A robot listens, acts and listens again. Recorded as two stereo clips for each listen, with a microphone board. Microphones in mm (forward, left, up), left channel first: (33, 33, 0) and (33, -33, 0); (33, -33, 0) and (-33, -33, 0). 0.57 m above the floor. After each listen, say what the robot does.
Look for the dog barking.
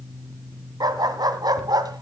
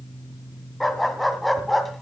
Turn 90° right.
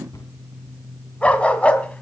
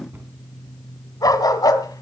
Turn 20° left.
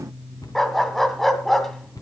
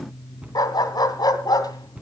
Facing the dog barking.